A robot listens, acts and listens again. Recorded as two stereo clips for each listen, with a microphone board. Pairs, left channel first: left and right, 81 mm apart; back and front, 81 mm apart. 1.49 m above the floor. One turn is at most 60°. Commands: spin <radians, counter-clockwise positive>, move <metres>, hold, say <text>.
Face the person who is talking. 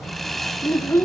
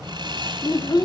spin 1.05
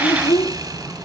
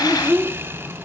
spin 1.05
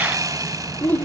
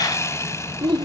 spin 0.35
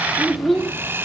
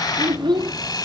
say Facing the child speaking.